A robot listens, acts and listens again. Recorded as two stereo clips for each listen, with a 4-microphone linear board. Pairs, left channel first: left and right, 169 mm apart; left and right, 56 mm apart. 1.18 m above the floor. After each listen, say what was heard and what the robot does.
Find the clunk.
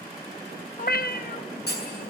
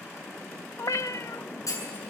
The clunk: about 75° left or 105° left. Turn 75° left.
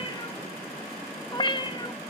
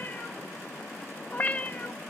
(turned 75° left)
Keep listening.
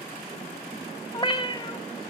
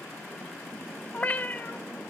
I heard a clunk, but can't make it out now. It was about straight ahead or 30° left.